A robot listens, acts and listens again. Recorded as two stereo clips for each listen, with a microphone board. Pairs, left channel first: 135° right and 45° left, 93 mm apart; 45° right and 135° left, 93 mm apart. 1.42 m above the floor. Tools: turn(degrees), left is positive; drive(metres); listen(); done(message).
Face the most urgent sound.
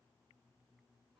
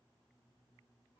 listen()
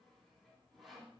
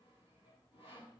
listen()
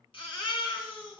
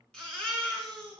turn(degrees=-125)
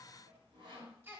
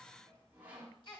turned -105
turn(degrees=-20)
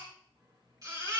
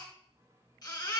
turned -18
done("Found it: a baby crying, straight ahead.")